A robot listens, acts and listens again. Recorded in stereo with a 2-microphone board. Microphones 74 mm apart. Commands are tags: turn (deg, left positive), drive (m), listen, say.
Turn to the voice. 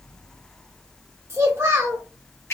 <turn deg="-40"/>
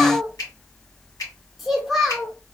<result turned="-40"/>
<say>Found it: a child speaking, straight ahead, under 1 m away.</say>